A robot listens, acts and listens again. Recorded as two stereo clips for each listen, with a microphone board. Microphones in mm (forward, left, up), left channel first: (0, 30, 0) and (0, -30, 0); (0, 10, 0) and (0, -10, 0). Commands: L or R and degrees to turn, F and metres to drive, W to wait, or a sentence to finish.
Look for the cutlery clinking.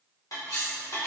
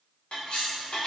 L90
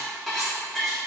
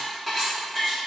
Facing the cutlery clinking.